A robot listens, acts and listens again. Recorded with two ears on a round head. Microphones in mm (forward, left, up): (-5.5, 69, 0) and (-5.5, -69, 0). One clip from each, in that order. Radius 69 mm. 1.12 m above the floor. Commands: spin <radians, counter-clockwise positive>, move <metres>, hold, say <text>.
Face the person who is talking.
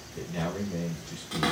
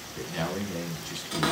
spin -1.22
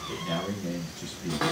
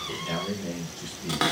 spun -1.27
say Facing the man speaking.